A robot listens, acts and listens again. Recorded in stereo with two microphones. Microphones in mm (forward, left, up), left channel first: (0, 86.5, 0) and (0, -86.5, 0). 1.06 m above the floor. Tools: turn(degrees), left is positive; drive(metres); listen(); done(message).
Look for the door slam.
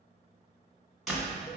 turn(degrees=30)
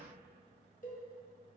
listen()
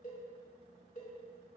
done("I heard a door slam, but can't make it out now. It was about 30° right or 150° left.")